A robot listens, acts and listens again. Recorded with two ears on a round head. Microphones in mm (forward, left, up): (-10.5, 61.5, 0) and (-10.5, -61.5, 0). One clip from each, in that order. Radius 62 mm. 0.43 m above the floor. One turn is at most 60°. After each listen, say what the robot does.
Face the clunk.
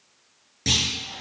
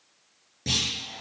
Turn 50° left.
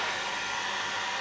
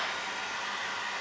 Keep listening.
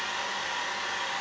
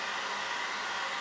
I heard a clunk, but can't make it out now. It was about straight ahead or 80° left.